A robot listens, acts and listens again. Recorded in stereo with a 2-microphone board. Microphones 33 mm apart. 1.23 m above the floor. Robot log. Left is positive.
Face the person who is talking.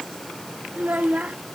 note: The child speaking: about 45° right or 135° right.
cmd yaw -45
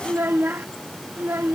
note: So it is at 90° right.
cmd yaw -90
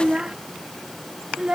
note: The child speaking is now 25° right.
cmd yaw -25
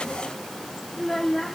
note: The child speaking is now 10° left.
cmd yaw +10
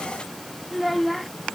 end: Found it: a child speaking, straight ahead.